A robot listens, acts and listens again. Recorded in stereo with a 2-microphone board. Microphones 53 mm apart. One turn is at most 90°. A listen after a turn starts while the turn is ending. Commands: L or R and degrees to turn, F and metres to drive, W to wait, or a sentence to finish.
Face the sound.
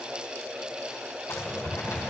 L70
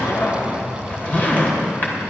L40
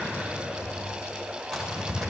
Facing the zipper, 2 to 4 m away.